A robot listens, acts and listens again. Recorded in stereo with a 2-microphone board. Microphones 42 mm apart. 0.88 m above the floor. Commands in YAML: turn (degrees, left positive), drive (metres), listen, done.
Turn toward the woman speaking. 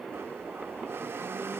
listen: true
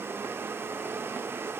listen: true
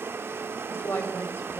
turn: 65
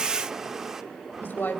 turn: 50
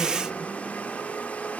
listen: true
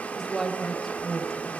done: "Found it: a woman speaking, straight ahead, 2 to 4 m away."